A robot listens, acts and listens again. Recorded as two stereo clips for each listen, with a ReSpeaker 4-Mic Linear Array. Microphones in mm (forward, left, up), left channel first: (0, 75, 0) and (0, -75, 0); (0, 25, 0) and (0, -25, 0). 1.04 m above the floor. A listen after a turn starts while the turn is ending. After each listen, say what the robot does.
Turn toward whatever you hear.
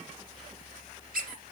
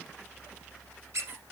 Turn 70° right.
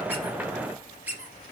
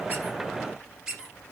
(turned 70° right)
Turn 10° right.
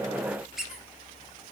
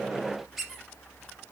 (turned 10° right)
Facing the squeak.